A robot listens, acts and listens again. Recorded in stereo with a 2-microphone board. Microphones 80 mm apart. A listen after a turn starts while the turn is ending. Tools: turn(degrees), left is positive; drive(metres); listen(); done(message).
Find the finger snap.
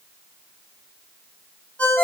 listen()
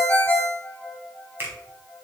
turn(degrees=-30)
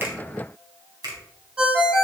turn(degrees=-125)
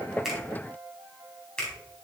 turn(degrees=10)
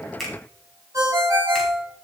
done("Facing the finger snap, 2 to 4 m away.")